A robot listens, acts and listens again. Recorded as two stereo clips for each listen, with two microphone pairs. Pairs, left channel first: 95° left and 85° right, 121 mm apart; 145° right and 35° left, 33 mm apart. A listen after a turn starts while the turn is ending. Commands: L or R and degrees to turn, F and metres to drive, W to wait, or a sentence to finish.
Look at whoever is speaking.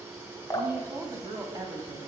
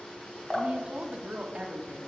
R25
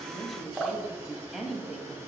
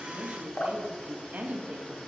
Found it: a woman speaking, straight ahead, under 1 m away.